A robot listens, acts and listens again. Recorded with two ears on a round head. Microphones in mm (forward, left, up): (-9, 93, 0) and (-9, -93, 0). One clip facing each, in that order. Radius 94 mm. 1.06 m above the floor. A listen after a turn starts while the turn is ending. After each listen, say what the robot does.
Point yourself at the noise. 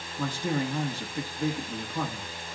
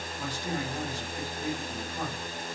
Turn 50° left.
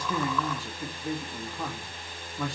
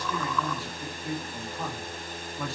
Facing the man speaking, 1 to 2 m away.